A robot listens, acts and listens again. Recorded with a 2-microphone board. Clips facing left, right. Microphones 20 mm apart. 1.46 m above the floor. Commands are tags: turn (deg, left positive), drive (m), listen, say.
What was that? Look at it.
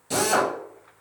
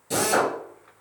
<turn deg="30"/>
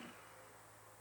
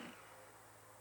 <listen/>
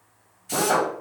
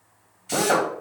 <turn deg="-20"/>
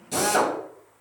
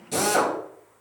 <say>Facing the drill, 1 to 2 m away.</say>